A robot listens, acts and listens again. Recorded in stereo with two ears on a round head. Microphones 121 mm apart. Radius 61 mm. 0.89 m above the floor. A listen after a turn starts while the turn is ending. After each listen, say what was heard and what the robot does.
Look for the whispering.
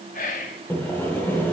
The whispering: about 60° left or 120° left. Turn 60° left.
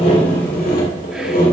Keep listening.
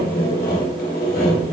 Keep listening.
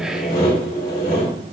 I heard whispering, but can't make it out now. It was about straight ahead or 60° left.